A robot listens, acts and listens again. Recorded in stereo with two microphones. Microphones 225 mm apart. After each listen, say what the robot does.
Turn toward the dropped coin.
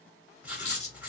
Turn 30° left.
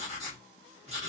Keep listening.
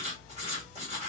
I heard a dropped coin, but can't make it out now. It was about straight ahead or 120° left.